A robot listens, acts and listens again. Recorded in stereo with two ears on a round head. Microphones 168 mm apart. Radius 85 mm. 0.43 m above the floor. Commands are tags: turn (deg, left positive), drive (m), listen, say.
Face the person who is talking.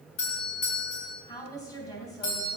<turn deg="20"/>
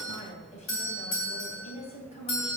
<turn deg="140"/>
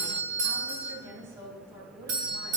<turn deg="-15"/>
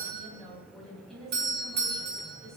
<say>Facing the woman speaking, 2 to 4 m away.</say>